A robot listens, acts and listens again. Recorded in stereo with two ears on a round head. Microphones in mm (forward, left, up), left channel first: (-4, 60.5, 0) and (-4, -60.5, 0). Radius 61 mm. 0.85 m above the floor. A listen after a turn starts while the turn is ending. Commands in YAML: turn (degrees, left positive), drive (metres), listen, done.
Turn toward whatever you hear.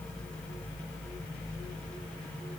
listen: true
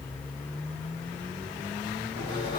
turn: 40
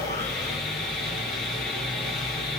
done: "Found it: sawing, straight ahead."